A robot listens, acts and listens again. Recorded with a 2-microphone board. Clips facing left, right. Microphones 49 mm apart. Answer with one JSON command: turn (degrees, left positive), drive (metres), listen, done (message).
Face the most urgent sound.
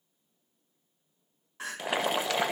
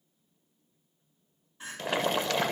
{"turn": 90}
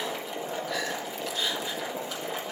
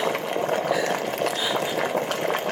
{"listen": true}
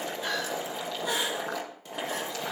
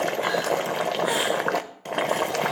{"listen": true}
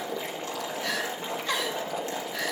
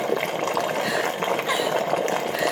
{"turn": -10}
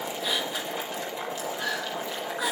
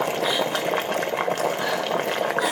{"listen": true}
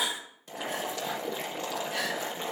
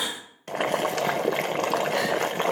{"done": "Facing the crying."}